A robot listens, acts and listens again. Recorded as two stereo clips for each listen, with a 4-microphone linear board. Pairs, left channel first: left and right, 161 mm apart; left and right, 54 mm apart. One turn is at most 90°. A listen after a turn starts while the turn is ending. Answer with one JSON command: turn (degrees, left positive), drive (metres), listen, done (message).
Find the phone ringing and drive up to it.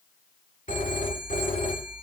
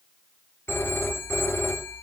{"turn": 50}
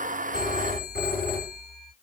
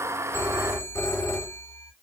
{"turn": 85}
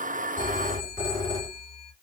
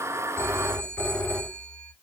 {"turn": 25}
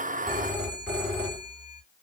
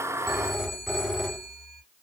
{"drive": 1.0}
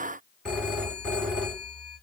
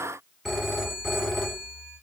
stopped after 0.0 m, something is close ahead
{"done": "Blocked. The phone ringing is further on, straight ahead."}